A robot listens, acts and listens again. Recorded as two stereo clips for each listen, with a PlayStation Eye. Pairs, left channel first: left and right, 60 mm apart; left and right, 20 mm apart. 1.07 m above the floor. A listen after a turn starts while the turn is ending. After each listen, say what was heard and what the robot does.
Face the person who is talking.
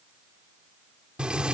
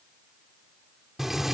Keep listening.
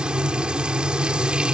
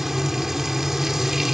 Keep listening.
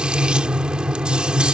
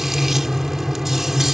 I can't make out anyone speaking, only frying.